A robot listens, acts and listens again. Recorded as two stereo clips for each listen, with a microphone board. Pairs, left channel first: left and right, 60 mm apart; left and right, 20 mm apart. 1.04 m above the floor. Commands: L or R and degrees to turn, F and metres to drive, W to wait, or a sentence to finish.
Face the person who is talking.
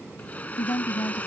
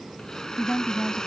L55
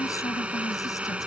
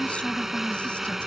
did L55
L70
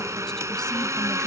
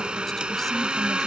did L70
W
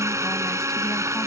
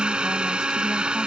W
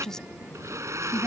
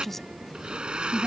L10
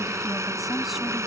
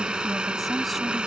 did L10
W
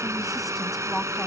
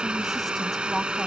W
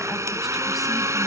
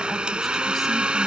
Facing where the woman speaking came from. I can't hear it now.